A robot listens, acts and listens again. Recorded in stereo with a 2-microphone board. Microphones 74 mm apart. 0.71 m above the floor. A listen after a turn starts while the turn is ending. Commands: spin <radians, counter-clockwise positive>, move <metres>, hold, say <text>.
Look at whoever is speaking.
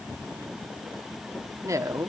spin -0.79
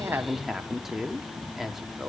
say Facing the woman speaking, 1 to 2 m away.